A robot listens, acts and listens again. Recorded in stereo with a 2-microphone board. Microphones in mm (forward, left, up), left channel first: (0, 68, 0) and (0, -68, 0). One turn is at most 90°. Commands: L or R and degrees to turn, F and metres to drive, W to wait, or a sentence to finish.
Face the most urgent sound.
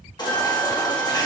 L30
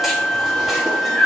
Found it: a baby crying, straight ahead, 1 to 2 m away.